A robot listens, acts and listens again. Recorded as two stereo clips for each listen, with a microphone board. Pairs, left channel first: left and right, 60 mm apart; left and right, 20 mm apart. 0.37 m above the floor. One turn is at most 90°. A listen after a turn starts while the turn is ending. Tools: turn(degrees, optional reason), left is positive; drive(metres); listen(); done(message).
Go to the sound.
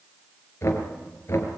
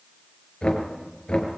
turn(degrees=45, reason="The knocking: about 45° left or 135° left.")
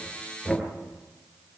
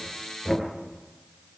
drive(metres=1.0)
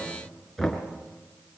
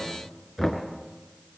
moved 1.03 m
drive(metres=1.0)
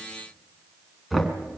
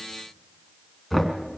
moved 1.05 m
drive(metres=1.0)
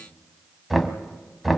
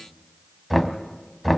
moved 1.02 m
drive(metres=1.0)
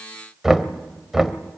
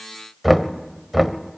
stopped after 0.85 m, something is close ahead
turn(degrees=-10, reason="The knocking is now 10° right.")
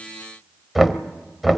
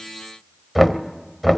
done("Arrived at the knocking, straight ahead.")